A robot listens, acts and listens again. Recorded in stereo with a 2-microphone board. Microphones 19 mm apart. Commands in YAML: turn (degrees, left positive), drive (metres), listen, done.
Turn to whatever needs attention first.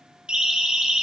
turn: -70
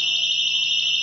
turn: -40
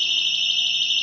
turn: 10
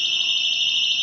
done: "Facing the siren, 2 to 4 m away."